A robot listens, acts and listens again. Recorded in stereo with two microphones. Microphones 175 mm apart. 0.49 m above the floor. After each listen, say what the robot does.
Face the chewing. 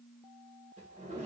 Keep listening.
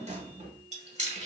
Turn 40° right.
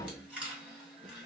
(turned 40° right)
Facing the chewing, 1 to 2 m away.